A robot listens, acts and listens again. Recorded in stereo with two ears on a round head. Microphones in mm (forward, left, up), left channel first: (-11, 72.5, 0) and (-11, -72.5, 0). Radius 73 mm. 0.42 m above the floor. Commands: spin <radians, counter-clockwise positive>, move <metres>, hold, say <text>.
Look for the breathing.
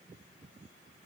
hold
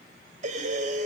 spin -0.87
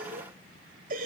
spin -1.22
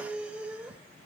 say Found it: breathing, straight ahead.